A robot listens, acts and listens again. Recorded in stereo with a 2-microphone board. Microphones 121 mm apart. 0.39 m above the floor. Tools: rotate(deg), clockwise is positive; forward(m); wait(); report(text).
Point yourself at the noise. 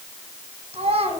rotate(60)
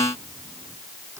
wait()
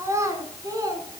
rotate(30)
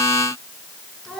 report("Facing the child speaking.")